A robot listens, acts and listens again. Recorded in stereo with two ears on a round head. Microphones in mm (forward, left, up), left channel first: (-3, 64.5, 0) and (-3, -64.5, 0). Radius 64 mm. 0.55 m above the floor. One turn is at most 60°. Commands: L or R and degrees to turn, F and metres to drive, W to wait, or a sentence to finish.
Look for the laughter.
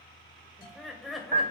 L30
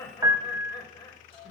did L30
L60
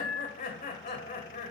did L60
L60
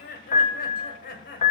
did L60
L60
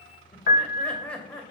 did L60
L10
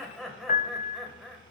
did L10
Facing the laughter, 2 to 4 m away.